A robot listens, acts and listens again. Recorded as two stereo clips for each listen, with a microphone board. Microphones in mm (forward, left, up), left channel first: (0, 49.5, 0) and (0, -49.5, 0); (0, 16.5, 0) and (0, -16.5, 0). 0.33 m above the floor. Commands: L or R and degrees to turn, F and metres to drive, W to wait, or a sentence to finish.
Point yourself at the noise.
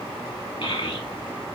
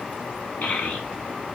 L55
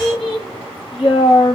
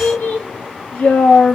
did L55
L65
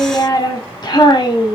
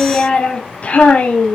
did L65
L50
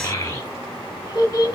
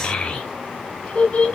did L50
L45
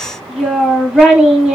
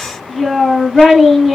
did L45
Facing the child speaking.